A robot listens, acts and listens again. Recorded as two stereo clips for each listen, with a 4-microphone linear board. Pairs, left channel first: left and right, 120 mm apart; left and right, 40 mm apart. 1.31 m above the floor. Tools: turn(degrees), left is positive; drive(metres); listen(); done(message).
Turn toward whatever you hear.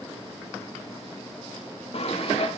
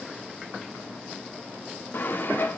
turn(degrees=60)
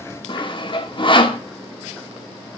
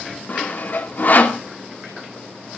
turn(degrees=50)
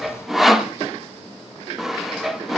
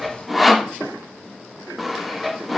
done("Facing the sawing.")